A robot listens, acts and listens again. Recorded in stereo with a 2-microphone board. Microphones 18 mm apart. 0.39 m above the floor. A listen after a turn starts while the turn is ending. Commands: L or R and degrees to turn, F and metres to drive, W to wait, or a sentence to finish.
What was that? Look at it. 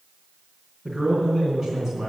R20
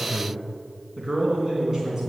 R30
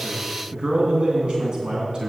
R140
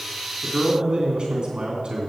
R45
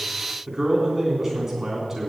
R10
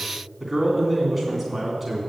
Facing the man speaking, 2 to 4 m away.